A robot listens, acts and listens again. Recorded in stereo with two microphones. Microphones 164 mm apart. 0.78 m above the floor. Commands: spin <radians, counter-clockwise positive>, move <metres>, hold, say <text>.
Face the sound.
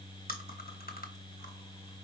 spin 1.13
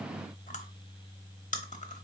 spin 0.87
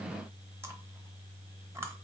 spin -0.26
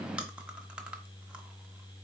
say Facing the chewing, under 1 m away.